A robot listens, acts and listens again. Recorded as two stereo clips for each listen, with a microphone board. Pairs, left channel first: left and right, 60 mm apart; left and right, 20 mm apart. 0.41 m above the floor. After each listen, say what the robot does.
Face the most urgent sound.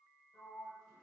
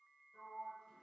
Keep listening.
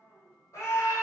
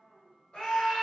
Turn 55° left.
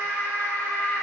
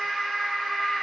Turn 45° left.
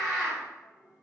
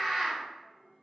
Found it: a scream, straight ahead, 1 to 2 m away.